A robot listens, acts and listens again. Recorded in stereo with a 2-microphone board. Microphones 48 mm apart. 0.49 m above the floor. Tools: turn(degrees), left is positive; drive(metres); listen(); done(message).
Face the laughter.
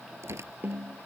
listen()
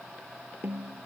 listen()
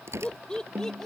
turn(degrees=30)
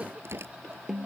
listen()
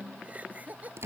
turn(degrees=-40)
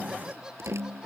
listen()
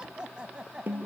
turn(degrees=-20)
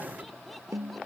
listen()
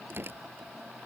listen()
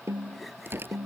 done("Facing where the laughter came from. I can't hear it now.")